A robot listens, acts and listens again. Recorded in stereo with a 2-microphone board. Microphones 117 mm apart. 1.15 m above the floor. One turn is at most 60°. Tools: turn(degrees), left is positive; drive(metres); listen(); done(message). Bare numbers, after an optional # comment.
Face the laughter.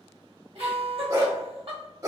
# The laughter: about 50° right or 130° right.
turn(-50)
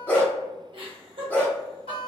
# So it is at 65° right.
turn(-60)
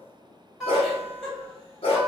done("Found it: laughter, straight ahead, 1 to 2 m away.")